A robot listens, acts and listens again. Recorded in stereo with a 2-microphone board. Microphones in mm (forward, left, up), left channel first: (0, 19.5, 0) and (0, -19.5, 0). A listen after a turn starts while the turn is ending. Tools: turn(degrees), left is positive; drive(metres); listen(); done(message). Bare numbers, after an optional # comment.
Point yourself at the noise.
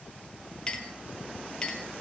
# The clink: about 25° left or 155° left.
turn(25)
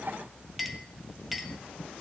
done("Found it: a clink, straight ahead, 1 to 2 m away.")